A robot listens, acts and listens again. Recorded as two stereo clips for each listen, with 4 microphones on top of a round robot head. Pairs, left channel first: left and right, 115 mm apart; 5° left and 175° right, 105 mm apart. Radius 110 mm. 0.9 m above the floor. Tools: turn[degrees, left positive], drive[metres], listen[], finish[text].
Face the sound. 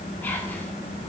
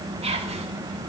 Thought: The whispering: 165° left.
Action: turn[165]
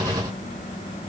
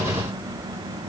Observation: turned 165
Action: listen[]
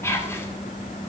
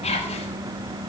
Thought: The whispering is now 20° left.
Action: turn[20]
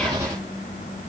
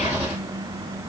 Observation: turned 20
Action: listen[]
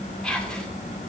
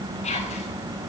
Action: finish[Found it: whispering, straight ahead.]